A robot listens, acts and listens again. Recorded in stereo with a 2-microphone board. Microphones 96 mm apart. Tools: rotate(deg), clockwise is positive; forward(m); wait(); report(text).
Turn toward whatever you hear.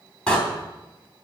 rotate(-30)
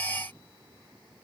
wait()
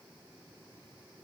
report("I heard a door slam, but can't make it out now. It was about 20° right or 140° left.")